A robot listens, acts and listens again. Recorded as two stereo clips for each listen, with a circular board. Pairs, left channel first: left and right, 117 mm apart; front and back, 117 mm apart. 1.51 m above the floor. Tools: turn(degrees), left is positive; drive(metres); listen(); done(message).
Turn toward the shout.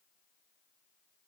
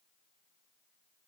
listen()
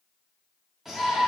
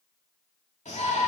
done("Facing the shout, 2 to 4 m away.")